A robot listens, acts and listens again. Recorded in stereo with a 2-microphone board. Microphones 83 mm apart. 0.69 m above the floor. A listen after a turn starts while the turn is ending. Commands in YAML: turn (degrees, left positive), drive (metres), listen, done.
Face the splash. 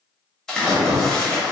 turn: 30
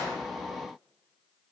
listen: true
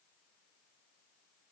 done: "I heard a splash, but can't make it out now. It was about 20° right or 140° left."